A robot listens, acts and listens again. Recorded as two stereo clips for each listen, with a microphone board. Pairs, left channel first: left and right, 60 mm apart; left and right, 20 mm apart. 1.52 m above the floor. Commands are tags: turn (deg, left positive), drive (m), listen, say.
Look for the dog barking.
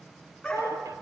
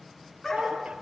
<turn deg="30"/>
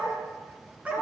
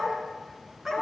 <turn deg="-25"/>
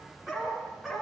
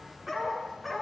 <turn deg="-10"/>
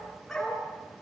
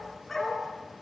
<say>Facing the dog barking.</say>